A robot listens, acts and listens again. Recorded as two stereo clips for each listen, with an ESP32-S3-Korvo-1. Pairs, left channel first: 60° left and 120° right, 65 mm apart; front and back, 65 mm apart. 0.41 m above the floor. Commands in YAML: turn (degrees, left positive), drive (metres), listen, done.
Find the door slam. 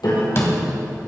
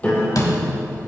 turn: 20
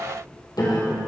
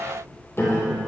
done: "I heard a door slam from this way, but can't make it out now."